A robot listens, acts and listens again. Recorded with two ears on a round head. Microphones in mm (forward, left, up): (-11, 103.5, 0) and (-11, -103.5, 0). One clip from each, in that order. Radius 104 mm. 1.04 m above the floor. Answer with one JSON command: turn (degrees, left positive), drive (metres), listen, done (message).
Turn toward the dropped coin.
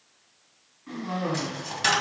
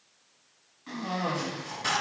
{"turn": 70}
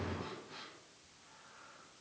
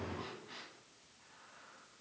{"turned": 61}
{"listen": true}
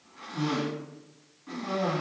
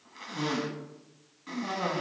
{"done": "I heard a dropped coin, but can't make it out now. It was about 10° left or 50° left."}